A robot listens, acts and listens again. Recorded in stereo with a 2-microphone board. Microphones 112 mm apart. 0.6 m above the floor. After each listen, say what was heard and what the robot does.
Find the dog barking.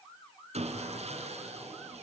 Keep listening.
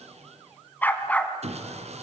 Turn 30° left.
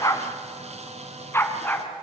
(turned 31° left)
The dog barking: about 15° left or 165° left. Turn 15° left.
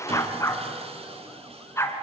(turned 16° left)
The dog barking: about 25° left or 155° left. Turn 25° left.
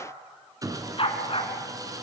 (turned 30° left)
So it is at 125° left. Turn 125° left.
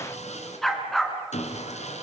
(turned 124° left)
Facing the dog barking, 2 to 4 m away.